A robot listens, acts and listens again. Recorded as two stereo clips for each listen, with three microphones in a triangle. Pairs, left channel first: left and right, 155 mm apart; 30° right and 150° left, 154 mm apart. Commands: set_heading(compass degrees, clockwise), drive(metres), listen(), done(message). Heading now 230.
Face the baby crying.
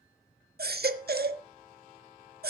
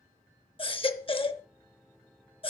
set_heading(320)
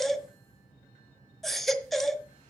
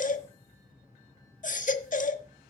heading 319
done("Found it: a baby crying, straight ahead.")